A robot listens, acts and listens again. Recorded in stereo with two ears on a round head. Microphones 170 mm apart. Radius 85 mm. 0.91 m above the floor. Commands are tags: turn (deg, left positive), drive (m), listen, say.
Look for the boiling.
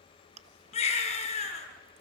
<listen/>
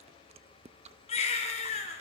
<listen/>
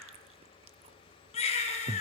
<say>I can't make out boiling, only a baby crying and chewing.</say>